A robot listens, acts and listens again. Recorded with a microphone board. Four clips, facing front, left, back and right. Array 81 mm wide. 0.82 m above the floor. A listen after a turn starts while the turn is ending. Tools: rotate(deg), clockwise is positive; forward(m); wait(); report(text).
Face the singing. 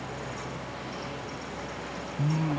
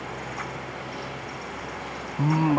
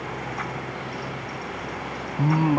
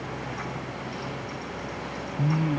rotate(-135)
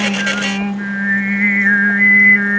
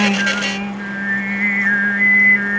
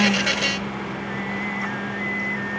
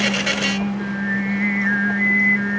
rotate(-15)
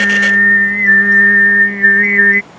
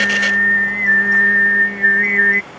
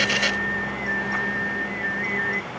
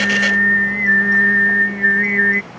report("Found it: singing, straight ahead.")